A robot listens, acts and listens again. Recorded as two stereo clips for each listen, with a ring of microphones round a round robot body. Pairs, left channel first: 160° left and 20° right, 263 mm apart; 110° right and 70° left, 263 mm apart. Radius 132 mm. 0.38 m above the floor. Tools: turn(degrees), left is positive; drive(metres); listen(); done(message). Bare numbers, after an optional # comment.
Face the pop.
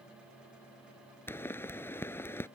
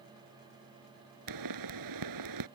# The pop: 75° left.
turn(75)
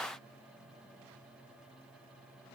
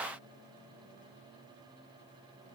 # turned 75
done("Facing where the pop came from. I can't hear it now.")